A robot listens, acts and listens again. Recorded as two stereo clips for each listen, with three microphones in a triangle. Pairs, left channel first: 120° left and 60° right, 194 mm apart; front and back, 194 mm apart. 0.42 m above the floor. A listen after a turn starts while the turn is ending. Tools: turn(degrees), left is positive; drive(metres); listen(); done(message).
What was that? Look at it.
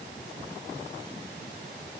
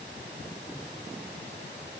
listen()
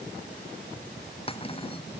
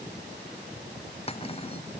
turn(degrees=60)
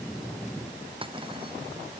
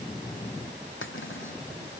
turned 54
done("Facing the cutlery clinking.")